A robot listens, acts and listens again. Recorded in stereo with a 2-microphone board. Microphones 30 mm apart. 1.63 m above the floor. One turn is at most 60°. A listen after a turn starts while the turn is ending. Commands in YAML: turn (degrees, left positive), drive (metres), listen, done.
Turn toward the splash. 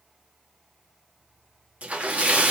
turn: -50
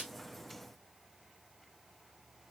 listen: true
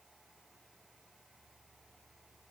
done: "I heard a splash, but can't make it out now. It was about straight ahead or 80° right."